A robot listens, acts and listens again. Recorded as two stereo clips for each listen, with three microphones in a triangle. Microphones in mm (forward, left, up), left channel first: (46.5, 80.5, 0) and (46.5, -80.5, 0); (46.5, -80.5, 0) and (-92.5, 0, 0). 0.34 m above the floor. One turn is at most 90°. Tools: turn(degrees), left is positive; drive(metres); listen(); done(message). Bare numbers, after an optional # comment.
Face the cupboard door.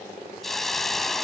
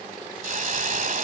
listen()
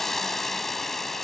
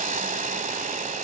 listen()
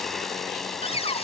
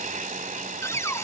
# The cupboard door: 40° left.
turn(40)
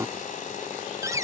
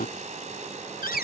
# The cupboard door is now 20° right.
turn(-20)
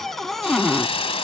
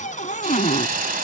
done("Facing the cupboard door.")